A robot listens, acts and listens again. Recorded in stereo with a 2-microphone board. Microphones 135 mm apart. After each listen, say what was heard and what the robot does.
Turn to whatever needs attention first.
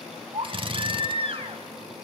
The baby crying: about 45° right or 135° right. Turn 45° right.
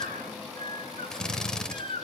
So it is at 90° right. Turn 90° right.
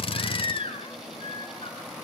The baby crying is now 40° left. Turn 40° left.
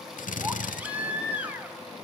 The baby crying is now 10° right. Turn 10° right.
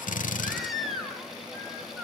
Facing the baby crying, 2 to 4 m away.